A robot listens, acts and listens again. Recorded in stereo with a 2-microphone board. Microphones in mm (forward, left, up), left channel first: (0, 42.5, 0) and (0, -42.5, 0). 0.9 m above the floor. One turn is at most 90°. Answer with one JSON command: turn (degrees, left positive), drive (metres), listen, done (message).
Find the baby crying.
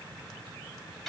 {"listen": true}
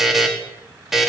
{"listen": true}
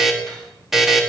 {"done": "I can't make out a baby crying, only a buzzer."}